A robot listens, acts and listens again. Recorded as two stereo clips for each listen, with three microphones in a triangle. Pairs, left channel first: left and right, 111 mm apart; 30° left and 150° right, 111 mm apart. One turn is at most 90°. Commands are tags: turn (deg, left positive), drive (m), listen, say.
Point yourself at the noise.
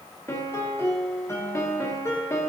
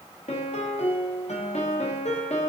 <turn deg="25"/>
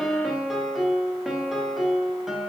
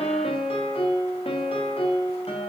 <say>Facing the piano.</say>